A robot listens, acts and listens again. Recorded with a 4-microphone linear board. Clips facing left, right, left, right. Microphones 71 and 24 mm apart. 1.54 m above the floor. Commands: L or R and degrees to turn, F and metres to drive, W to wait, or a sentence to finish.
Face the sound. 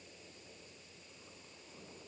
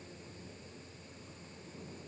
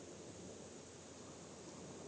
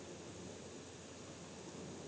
W
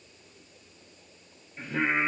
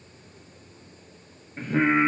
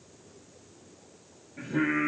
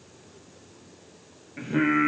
R50
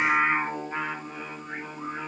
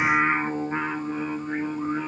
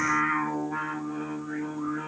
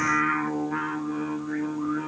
R10
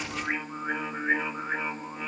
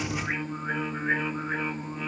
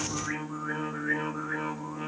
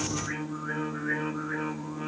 L10
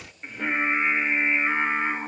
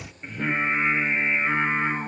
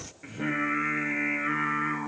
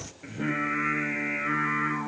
Facing the singing.